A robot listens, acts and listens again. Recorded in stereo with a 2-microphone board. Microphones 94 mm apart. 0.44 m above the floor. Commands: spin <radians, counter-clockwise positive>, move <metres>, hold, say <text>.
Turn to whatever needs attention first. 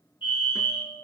spin 1.13
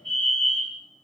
say Found it: a fire alarm, straight ahead, over 4 m away.